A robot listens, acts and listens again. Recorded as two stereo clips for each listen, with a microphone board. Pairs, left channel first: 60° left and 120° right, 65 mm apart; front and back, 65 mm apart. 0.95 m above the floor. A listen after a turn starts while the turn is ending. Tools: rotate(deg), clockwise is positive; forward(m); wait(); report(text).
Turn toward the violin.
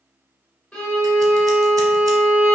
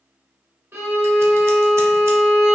rotate(-135)
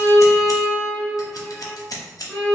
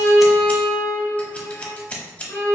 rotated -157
rotate(25)
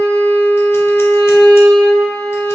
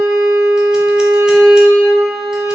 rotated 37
rotate(-15)
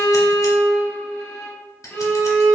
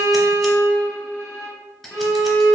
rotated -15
report("Facing the violin, 1 to 2 m away.")